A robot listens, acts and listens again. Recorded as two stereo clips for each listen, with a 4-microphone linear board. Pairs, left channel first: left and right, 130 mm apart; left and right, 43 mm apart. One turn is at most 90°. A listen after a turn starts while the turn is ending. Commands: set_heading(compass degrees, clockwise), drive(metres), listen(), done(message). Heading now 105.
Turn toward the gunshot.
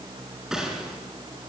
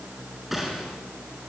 set_heading(135)
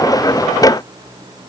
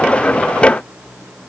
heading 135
listen()
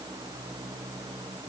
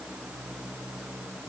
done("I heard a gunshot, but can't make it out now. It was about 25° left or 145° right.")